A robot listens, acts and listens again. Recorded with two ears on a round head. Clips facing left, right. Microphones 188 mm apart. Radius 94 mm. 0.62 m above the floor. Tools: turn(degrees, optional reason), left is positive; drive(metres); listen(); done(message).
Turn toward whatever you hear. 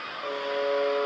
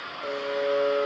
turn(degrees=-30)
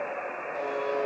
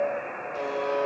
turn(degrees=-135, reason="So it is at 135° right.")
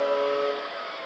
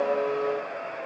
turn(degrees=40, reason="The buzzer is now 40° left.")
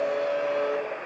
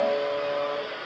turn(degrees=20, reason="The buzzer is now 20° left.")
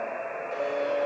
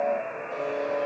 done("Found it: a buzzer, straight ahead, 2 to 4 m away.")